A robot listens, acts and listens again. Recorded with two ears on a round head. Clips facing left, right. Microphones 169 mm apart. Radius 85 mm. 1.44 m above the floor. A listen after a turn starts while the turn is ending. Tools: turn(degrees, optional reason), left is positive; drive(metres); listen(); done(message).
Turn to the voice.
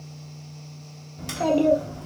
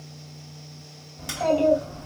turn(degrees=60, reason="The child speaking: about 60° left or 120° left.")
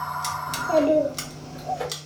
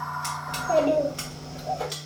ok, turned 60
turn(degrees=20, reason="So it is at 20° left.")
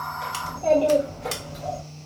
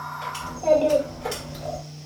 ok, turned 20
turn(degrees=-15, reason="The child speaking is now 15° right.")
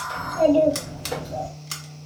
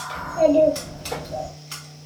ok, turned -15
done("Found it: a child speaking, straight ahead.")